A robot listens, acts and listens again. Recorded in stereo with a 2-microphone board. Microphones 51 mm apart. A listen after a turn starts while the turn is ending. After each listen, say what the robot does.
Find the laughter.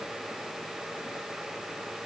Keep listening.
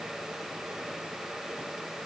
Keep listening.
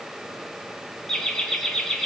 Turn 30° left.
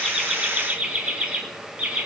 Turn 30° right.
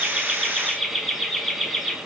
Facing the laughter, 2 to 4 m away.